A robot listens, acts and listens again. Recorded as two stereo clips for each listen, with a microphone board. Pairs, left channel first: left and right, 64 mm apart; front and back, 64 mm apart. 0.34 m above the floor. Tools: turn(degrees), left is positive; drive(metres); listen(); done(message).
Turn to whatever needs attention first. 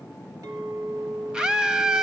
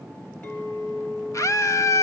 turn(degrees=-15)
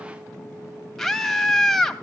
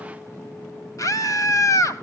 done("Found it: a scream, straight ahead.")